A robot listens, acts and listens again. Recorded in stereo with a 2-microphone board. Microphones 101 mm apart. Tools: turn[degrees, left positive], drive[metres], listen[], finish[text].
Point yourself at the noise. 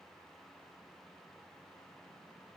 Action: listen[]
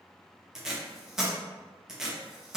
Action: turn[-30]
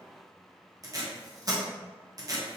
Thought: So it is at 145° right.
Action: turn[-145]
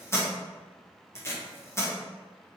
Thought: The tape being pulled is now 25° left.
Action: turn[25]
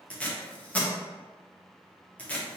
Thought: The tape being pulled is now 15° left.
Action: turn[15]
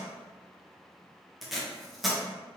Action: finish[Found it: tape being pulled, straight ahead.]